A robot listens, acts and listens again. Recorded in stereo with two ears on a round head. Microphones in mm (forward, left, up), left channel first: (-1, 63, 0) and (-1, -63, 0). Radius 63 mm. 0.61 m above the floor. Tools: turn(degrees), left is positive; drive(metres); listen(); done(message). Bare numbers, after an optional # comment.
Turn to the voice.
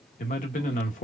# The man speaking: about 60° left or 120° left.
turn(60)
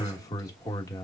# So it is at 30° left.
turn(30)
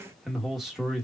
done("Found it: a man speaking, straight ahead.")